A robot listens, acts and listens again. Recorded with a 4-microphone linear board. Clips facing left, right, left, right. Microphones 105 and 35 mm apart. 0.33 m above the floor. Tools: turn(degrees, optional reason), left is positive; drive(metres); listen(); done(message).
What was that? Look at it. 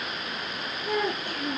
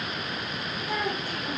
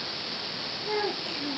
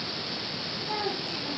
turn(degrees=55, reason="The child speaking: about 55° left or 125° left.")
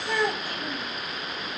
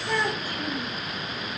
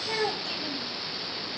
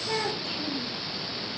done("Facing the child speaking.")